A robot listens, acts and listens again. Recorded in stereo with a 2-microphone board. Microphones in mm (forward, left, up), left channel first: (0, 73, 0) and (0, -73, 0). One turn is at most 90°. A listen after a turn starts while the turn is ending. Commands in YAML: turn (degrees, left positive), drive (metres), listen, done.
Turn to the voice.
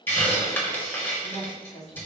turn: 55
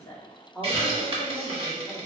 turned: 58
turn: 10
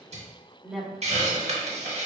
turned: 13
done: "Found it: a woman speaking, straight ahead, 1 to 2 m away."